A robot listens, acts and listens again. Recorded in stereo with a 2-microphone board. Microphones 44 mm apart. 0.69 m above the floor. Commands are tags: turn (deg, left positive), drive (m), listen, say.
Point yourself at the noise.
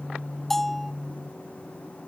<turn deg="30"/>
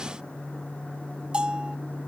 <turn deg="-25"/>
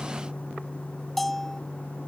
<say>Found it: a bell, straight ahead.</say>